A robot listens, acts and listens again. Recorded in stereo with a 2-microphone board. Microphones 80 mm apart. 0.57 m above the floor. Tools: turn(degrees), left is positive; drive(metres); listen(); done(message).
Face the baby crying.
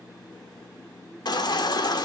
turn(degrees=65)
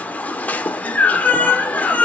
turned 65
turn(degrees=20)
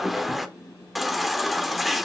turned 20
done("Found it: a baby crying, straight ahead.")